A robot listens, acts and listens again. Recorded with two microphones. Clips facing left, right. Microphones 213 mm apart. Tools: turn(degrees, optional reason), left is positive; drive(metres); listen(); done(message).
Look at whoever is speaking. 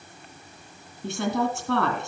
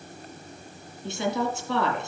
turn(degrees=65, reason="The woman speaking: about 65° left or 115° left.")
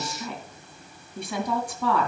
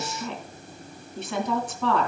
turn(degrees=10, reason="So it is at 10° left.")
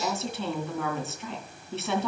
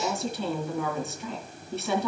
done("Facing the woman speaking.")